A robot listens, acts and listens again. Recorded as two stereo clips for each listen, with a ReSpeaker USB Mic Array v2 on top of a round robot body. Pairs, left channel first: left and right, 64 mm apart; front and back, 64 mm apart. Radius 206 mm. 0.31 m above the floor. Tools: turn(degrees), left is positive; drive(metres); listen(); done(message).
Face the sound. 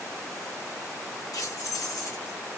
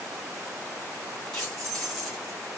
turn(degrees=85)
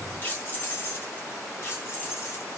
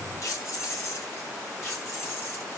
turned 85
turn(degrees=45)
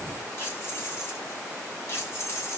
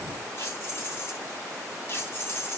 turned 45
turn(degrees=40)
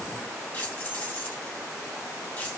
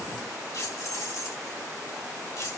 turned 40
turn(degrees=25)
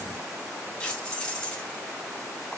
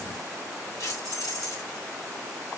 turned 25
turn(degrees=10)
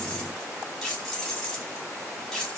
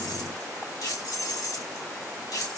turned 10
done("Found it: keys jangling, straight ahead.")